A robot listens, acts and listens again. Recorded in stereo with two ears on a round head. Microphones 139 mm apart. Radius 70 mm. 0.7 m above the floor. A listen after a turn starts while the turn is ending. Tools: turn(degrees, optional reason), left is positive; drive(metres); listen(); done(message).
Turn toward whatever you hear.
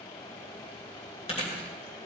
turn(degrees=40, reason="The chewing: about 40° left or 140° left.")
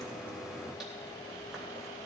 listen()
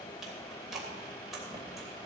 done("Facing the chewing, 2 to 4 m away.")